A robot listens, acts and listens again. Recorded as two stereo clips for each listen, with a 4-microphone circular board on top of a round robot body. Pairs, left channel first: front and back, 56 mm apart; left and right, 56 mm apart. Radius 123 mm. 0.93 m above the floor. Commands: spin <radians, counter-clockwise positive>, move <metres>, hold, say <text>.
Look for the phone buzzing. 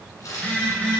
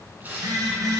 spin -1.22
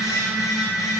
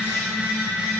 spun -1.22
spin -0.26
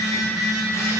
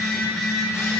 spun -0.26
say Facing the phone buzzing, 2 to 4 m away.